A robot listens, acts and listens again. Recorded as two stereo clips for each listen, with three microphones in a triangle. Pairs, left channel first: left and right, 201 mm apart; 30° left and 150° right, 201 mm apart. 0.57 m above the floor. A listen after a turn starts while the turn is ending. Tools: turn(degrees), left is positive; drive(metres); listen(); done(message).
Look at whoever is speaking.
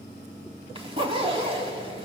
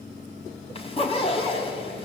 listen()
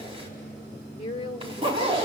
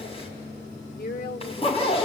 turn(degrees=40)
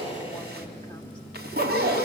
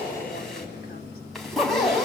listen()
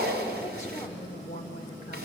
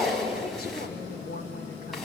turn(degrees=50)
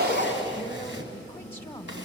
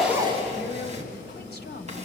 turn(degrees=15)
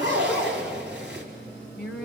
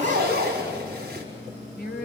done("Facing the woman speaking.")